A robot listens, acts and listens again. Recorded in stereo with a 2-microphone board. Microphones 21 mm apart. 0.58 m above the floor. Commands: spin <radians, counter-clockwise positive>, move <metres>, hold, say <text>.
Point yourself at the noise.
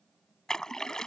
spin 0.52
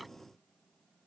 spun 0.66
hold
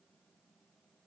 say I heard a splash, but can't make it out now. It was about 10° right or 110° left.